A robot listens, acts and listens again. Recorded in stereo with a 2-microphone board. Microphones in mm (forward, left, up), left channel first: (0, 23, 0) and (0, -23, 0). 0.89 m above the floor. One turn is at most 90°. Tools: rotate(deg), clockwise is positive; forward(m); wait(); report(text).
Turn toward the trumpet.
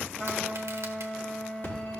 rotate(-25)
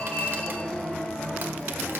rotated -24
wait()
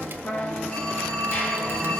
rotate(-90)
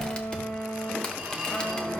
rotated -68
rotate(-65)
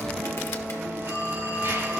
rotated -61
wait()
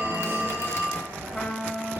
report("Found it: a trumpet, straight ahead.")